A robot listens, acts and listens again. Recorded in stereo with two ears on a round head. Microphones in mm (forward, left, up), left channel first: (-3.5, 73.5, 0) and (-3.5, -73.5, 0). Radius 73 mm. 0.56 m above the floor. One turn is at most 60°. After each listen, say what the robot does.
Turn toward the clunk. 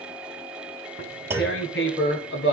Turn 30° right.
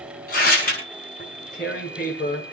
Keep listening.
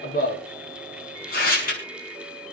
I heard a clunk, but can't make it out now. It was about 15° left or 135° right.